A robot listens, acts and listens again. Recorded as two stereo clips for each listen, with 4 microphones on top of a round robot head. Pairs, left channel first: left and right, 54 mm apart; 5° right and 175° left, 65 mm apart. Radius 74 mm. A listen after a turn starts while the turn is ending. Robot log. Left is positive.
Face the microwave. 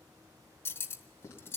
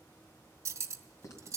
cmd idle
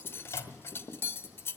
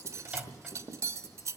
note: The microwave: 105° left.
cmd yaw +105
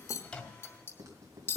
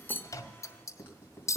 cmd idle
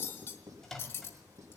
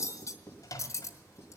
end: Found it: a microwave, straight ahead.